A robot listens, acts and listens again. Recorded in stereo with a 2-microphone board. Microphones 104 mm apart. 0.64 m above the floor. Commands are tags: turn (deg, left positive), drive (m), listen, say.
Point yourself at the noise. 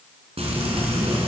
<turn deg="-75"/>
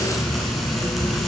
<say>Facing the frying, 2 to 4 m away.</say>